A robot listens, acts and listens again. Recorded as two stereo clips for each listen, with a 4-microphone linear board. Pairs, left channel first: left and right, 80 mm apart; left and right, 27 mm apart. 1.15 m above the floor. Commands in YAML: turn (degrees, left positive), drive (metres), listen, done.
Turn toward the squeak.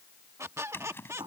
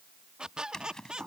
turn: -35
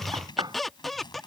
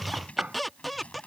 done: "Facing the squeak."